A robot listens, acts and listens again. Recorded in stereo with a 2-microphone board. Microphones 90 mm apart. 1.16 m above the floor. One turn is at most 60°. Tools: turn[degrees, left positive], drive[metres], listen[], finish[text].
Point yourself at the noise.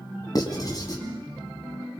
Thought: The writing: about 45° left or 135° left.
Action: turn[45]
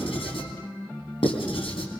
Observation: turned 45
Thought: So it is at 95° left.
Action: turn[60]
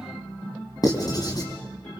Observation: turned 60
Thought: The writing is now 45° left.
Action: turn[45]
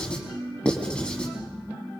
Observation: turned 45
Thought: The writing is now 10° left.
Action: turn[10]
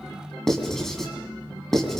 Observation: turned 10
Action: finish[Found it: writing, straight ahead, 2 to 4 m away.]